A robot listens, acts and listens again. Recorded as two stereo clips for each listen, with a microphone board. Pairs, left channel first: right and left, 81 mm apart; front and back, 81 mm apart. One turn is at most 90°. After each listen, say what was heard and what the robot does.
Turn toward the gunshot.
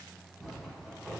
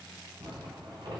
Keep listening.
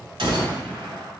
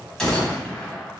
The gunshot: 80° left. Turn 80° left.
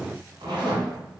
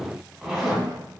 I heard a gunshot from this way, but can't make it out now.